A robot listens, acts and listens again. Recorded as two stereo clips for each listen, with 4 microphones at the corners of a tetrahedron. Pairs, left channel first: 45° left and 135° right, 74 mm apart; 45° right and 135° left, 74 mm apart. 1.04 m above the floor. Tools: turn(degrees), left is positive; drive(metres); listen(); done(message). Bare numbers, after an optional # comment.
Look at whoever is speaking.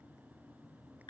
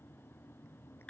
listen()
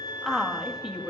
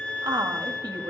# The woman speaking: 145° left.
turn(145)
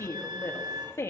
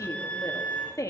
done("Facing the woman speaking.")